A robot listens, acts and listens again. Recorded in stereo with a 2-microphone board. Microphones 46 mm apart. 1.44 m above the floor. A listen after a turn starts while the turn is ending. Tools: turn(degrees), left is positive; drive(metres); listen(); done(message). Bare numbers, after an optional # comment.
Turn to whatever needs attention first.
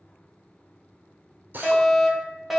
turn(-30)
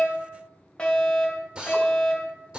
# So it is at 25° left.
turn(25)
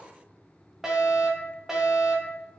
# The fire alarm is now 10° right.
turn(-10)
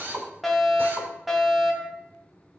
done("Found it: a fire alarm, straight ahead, 2 to 4 m away.")